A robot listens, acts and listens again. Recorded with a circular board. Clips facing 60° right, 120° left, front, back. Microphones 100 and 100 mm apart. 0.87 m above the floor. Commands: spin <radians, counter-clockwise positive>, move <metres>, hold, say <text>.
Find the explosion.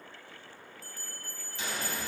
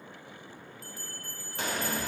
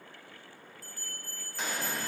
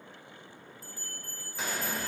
spin 1.66
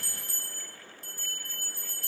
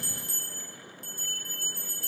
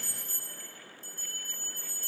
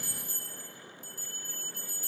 say Facing where the explosion came from. I can't hear it now.